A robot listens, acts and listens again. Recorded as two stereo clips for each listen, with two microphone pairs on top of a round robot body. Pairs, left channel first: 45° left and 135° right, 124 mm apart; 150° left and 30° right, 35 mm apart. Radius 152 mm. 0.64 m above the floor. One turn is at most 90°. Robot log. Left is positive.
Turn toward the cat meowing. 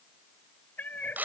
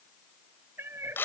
note: The cat meowing: 35° right.
cmd yaw -35
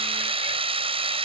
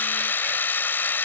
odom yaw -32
cmd idle
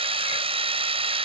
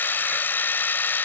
cmd idle
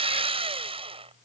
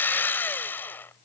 end: I heard a cat meowing from this way, but can't make it out now.